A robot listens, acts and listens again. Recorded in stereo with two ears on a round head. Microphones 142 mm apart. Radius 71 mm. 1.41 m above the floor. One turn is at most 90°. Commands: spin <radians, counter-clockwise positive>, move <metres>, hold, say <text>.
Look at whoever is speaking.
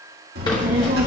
spin -1.22
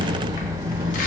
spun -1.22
spin -0.52
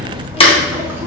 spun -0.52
spin -0.35
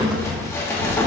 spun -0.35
say Found it: a child speaking, straight ahead.